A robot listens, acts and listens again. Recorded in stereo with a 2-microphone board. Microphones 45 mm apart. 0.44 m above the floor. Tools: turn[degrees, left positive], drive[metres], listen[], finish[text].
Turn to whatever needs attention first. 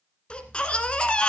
Thought: The baby crying: about 25° left or 155° left.
Action: turn[25]
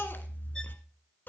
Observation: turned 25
Thought: So it is at 130° left.
Action: turn[130]
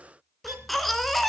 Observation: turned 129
Action: finish[Facing the baby crying, 1 to 2 m away.]